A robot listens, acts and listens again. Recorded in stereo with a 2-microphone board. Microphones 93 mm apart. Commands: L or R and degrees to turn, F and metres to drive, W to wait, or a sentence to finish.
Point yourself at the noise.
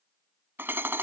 R25
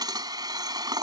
R130
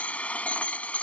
L15
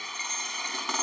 Found it: hammering, straight ahead.